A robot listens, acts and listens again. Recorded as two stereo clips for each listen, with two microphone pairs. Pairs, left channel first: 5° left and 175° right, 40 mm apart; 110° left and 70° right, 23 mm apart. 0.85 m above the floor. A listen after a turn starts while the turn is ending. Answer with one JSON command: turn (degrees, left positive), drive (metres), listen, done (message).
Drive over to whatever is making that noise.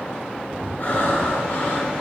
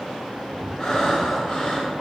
{"turn": 45}
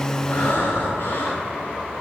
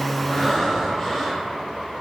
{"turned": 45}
{"turn": 20}
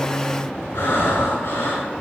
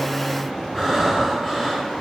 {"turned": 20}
{"turn": 10}
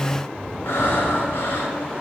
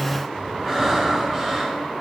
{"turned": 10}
{"drive": 1.0}
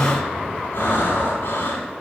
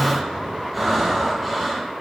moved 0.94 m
{"drive": 1.0}
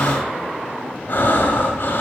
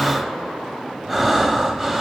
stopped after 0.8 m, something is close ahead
{"done": "I am next to the breathing."}